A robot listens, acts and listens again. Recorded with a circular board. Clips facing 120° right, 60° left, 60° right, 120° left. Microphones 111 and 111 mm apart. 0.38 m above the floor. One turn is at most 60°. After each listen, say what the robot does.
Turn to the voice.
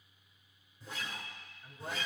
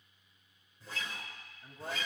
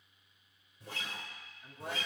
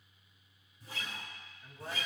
Turn 20° left.
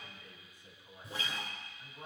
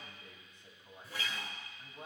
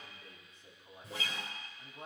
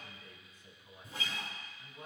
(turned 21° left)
Found it: a man speaking, straight ahead.